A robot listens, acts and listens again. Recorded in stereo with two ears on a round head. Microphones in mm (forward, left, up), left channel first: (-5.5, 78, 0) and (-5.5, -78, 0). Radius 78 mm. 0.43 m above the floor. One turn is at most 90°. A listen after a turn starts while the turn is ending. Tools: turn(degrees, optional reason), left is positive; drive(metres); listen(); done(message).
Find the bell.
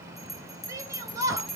turn(degrees=30)
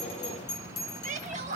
turn(degrees=90, reason="So it is at 150° left.")
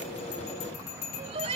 turn(degrees=60, reason="The bell is now 60° left.")
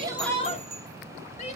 turn(degrees=-25, reason="The bell is now 25° right.")
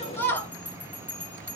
turn(degrees=10, reason="The bell is now 10° left.")
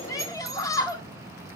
listen()
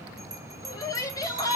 done("Facing the bell, 2 to 4 m away.")